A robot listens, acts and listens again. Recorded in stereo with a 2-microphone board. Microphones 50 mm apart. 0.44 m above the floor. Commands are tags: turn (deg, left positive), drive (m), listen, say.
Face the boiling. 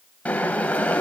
<turn deg="25"/>
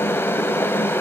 <turn deg="125"/>
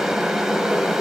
<turn deg="-10"/>
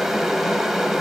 <say>Facing the boiling, 2 to 4 m away.</say>